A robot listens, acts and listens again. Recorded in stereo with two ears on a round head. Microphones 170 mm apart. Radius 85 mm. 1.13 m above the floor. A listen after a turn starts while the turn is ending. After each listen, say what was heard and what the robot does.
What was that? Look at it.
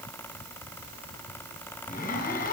The zipper: about 50° left or 130° left. Turn 50° left.
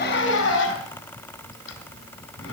So it is at 80° left. Turn 80° left.
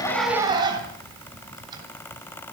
The zipper is now 25° right. Turn 25° right.
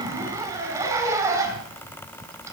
The zipper is now 15° right. Turn 15° right.
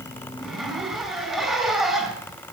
Facing the zipper.